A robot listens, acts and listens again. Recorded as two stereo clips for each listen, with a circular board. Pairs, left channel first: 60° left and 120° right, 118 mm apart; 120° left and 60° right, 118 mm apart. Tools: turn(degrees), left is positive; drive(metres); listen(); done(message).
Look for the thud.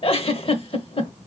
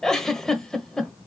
listen()
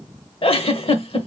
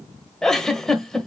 listen()
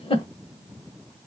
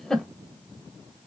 done("I can't make out a thud, only a giggle.")